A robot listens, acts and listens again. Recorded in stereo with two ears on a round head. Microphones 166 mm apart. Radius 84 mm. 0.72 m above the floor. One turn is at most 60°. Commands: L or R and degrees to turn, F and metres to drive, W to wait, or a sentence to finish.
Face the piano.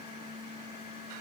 W
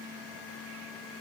W
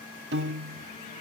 R60
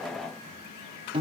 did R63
R30
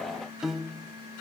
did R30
Facing the piano.